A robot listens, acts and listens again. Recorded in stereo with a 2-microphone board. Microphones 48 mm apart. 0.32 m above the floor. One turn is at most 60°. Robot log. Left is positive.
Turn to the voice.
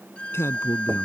note: The man speaking: about 65° left or 115° left.
cmd yaw +60
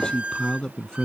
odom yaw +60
note: So it is at 15° left.
cmd yaw +15
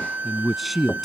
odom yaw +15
end: Facing the man speaking.